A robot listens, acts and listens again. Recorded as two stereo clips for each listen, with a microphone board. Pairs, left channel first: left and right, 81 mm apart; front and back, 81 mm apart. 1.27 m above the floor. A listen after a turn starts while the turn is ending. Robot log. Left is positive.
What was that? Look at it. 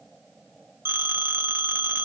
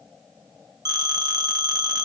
note: The phone ringing: 150° right.
cmd yaw -150
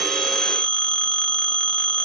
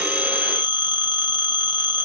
note: The phone ringing is now 10° left.
cmd yaw +10
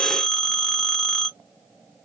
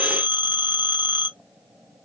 end: Found it: a phone ringing, straight ahead, 1 to 2 m away.